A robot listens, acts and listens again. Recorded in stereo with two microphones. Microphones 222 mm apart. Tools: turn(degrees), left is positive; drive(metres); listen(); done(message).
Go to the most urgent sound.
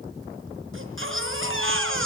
turn(degrees=-65)
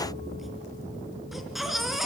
drive(metres=1.0)
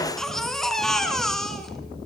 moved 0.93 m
drive(metres=1.0)
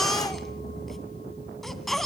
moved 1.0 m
drive(metres=1.0)
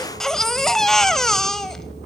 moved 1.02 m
drive(metres=1.0)
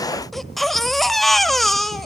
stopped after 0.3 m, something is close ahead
done("Arrived at the baby crying, straight ahead.")